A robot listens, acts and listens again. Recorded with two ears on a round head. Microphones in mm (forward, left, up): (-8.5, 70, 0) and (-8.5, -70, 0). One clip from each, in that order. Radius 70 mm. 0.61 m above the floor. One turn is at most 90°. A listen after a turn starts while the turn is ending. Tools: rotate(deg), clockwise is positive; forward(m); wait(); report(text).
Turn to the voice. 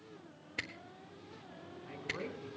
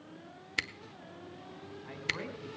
rotate(20)
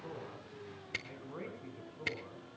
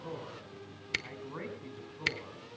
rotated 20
rotate(90)
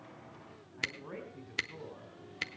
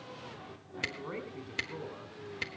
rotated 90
rotate(35)
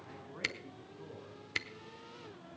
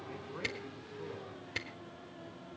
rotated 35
wait()
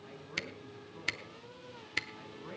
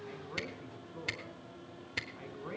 rotate(15)
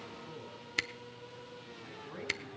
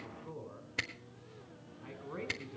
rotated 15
report("Facing the man speaking, 2 to 4 m away.")